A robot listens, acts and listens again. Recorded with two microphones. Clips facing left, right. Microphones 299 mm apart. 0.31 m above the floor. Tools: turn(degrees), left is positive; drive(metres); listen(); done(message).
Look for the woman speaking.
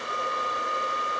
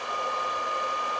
listen()
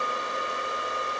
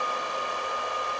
listen()
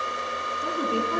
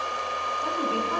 turn(degrees=25)
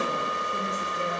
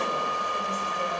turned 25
listen()
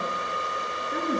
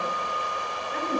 turn(degrees=120)
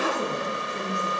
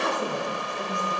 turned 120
turn(degrees=35)
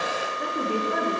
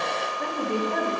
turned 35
done("Facing the woman speaking, over 4 m away.")